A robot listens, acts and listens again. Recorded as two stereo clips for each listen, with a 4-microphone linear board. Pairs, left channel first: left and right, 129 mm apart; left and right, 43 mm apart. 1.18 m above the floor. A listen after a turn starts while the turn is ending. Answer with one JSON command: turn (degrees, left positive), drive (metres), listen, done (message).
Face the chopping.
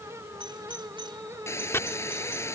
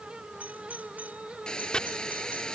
{"turn": 20}
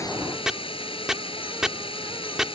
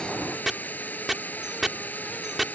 {"done": "Facing the chopping."}